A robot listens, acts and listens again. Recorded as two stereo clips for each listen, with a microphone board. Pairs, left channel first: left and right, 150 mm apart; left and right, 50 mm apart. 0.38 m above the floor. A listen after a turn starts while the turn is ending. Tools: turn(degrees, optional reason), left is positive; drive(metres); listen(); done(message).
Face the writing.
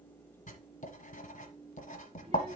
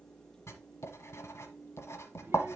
turn(degrees=55, reason="The writing: about 55° left or 125° left.")
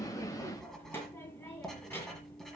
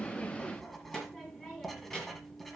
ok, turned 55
done("Facing the writing.")